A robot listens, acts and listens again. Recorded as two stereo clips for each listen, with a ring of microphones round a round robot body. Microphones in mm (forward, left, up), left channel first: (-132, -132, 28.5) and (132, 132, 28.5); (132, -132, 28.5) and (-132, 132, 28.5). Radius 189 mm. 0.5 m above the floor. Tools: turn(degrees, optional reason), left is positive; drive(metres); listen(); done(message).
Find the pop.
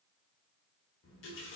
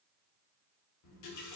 listen()
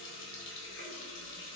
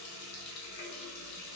listen()
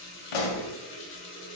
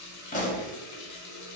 turn(degrees=-115, reason="The pop: 115° right.")
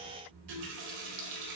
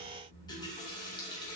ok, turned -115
done("I heard a pop from this way, but can't make it out now.")